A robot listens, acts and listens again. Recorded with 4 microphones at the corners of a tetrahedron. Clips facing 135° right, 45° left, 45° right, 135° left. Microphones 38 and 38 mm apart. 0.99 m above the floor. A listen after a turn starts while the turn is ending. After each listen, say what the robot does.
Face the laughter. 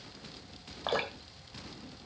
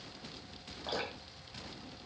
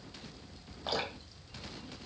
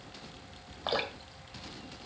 Keep listening.
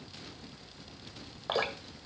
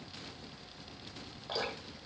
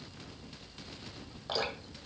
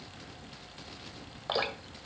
Keep listening.
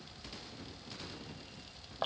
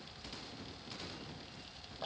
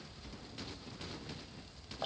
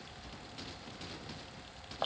I can't make out laughter, only dripping.